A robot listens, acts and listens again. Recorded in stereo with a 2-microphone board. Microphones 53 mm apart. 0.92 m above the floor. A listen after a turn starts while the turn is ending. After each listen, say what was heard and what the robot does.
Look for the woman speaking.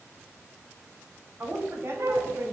The woman speaking: about 55° right or 125° right. Turn 55° right.
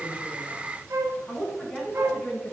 Facing the woman speaking.